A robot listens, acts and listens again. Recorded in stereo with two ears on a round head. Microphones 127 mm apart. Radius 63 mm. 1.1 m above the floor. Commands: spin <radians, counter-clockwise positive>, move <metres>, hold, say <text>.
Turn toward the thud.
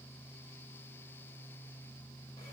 hold
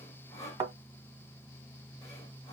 spin -0.52
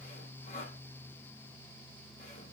hold
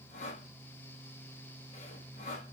say I heard a thud, but can't make it out now. It was about straight ahead or 120° right.